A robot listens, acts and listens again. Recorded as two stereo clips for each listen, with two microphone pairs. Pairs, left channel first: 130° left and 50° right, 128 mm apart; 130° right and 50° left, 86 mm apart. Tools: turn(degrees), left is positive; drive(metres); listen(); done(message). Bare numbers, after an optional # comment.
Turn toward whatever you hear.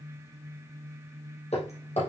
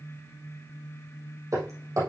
# The hammering: 100° left.
turn(100)
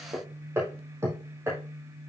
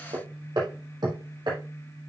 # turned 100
# The hammering is now 20° left.
turn(20)
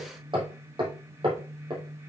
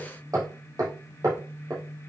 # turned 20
done("Found it: hammering, straight ahead, 2 to 4 m away.")